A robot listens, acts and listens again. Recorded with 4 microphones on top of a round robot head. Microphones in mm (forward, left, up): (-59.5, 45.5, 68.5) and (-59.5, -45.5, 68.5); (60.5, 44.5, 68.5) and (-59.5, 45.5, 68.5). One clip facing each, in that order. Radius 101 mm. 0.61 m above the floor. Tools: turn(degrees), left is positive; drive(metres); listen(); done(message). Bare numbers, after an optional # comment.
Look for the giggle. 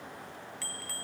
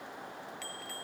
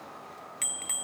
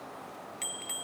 listen()
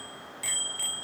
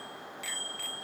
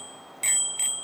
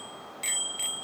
listen()
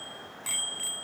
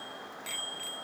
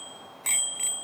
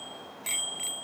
done("I can't make out a giggle to turn to.")